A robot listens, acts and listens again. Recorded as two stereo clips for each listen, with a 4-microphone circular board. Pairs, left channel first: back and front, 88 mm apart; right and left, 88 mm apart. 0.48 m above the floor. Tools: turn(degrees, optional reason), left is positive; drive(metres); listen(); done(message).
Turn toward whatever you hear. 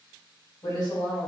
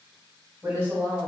turn(degrees=165, reason="The woman speaking: 165° left.")
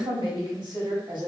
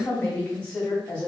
turn(degrees=-10, reason="The woman speaking is now 10° right.")
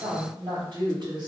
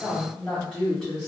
done("Facing the woman speaking, 1 to 2 m away.")